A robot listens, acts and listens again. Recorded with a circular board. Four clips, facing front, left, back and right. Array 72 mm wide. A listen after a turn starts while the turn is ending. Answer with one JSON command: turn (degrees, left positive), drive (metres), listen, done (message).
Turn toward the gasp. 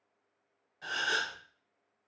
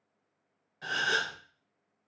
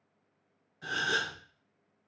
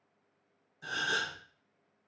{"turn": 80}
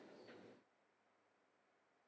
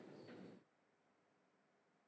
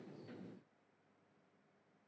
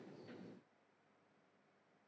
{"done": "Facing where the gasp came from. I can't hear it now."}